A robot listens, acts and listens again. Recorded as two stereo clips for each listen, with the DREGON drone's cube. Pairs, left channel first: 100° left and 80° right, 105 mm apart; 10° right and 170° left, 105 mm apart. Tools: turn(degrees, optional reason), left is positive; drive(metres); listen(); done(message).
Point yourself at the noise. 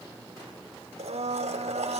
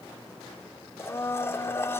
turn(degrees=-80, reason="The blender: 80° right.")
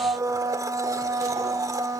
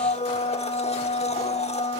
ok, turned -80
turn(degrees=-20, reason="The blender is now 20° right.")
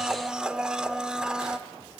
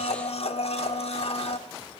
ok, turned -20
done("Found it: a blender, straight ahead.")